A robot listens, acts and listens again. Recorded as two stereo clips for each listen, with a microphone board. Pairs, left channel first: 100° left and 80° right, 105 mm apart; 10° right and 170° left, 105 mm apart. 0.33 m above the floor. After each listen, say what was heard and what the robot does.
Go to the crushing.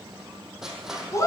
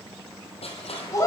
Drive 1.0 m forward.
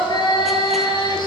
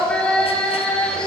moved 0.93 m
Keep listening.
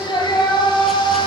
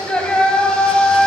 Keep listening.
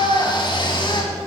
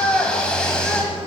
Facing where the crushing came from. I can't hear it now. I did not reach it.